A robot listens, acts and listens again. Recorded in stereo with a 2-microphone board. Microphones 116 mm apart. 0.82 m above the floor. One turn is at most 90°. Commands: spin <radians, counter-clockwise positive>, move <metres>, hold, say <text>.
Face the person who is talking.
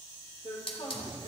spin 0.96
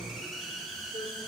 spin 1.22
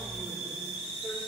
hold
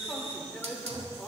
say Found it: a man speaking, straight ahead.